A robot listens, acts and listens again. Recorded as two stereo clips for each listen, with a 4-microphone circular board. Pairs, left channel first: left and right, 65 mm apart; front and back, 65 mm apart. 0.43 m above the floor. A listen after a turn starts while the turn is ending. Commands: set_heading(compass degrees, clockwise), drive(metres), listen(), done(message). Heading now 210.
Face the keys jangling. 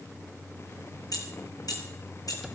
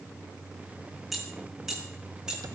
set_heading(105)
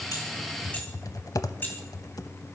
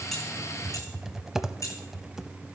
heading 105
set_heading(75)
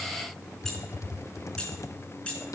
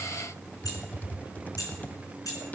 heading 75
set_heading(55)
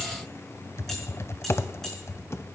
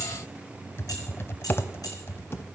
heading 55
listen()
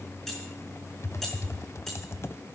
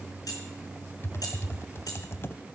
listen()
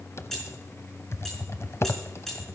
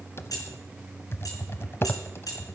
done("Facing the keys jangling.")